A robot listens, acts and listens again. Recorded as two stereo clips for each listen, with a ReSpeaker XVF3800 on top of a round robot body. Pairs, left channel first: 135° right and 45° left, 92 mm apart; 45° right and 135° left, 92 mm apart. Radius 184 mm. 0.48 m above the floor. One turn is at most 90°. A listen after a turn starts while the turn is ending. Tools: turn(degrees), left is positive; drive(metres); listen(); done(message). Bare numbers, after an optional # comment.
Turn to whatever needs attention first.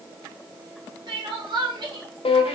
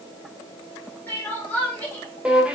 # The crying: 25° left.
turn(25)
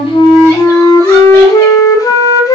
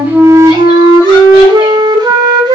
listen()
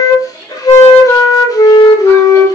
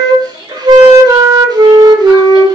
# The crying is now 15° right.
turn(-15)
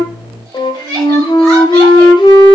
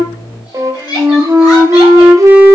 done("Facing the crying.")